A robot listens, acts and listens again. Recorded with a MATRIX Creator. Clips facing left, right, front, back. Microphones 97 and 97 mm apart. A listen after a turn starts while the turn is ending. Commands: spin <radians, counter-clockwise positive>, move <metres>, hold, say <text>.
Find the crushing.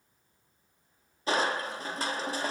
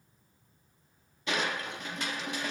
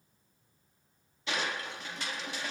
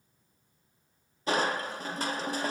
spin 2.36
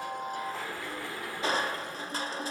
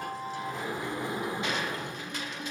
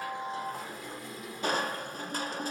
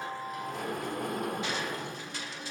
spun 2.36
spin 0.70
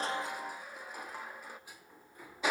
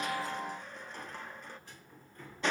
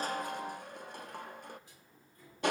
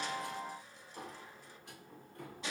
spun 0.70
spin 0.17
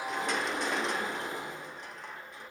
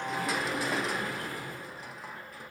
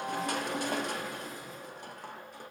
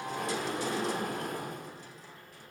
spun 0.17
say Found it: crushing, straight ahead, under 1 m away.